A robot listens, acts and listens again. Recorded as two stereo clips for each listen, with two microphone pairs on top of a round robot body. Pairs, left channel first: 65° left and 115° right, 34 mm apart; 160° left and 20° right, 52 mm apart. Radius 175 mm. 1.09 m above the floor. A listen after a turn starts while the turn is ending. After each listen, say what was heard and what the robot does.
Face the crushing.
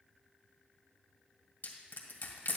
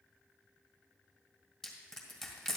The crushing: 70° left. Turn 70° left.
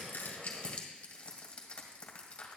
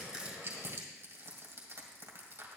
Facing the crushing, 1 to 2 m away.